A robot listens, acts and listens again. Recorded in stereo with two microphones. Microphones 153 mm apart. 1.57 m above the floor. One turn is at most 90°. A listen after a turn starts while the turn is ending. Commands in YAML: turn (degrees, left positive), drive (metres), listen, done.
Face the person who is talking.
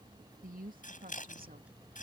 turn: -70
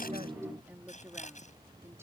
turn: -15
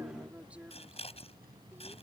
turn: -10
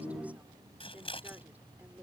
turn: -10
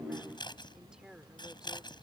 done: "Facing the woman speaking."